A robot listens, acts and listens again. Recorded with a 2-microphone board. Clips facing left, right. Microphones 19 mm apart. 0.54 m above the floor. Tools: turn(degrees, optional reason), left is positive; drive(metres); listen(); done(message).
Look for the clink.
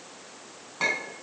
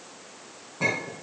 turn(degrees=90)
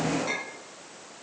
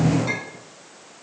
turn(degrees=-10, reason="So it is at 10° right.")
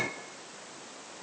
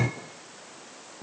done("Facing the clink.")